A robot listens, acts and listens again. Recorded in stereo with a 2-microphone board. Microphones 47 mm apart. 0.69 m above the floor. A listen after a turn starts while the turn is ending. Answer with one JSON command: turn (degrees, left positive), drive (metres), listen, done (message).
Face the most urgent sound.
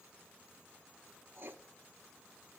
{"listen": true}
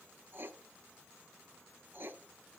{"listen": true}
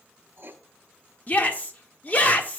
{"turn": 30}
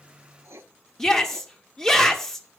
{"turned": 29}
{"turn": 10}
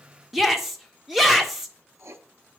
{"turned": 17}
{"done": "Facing the shout, 1 to 2 m away."}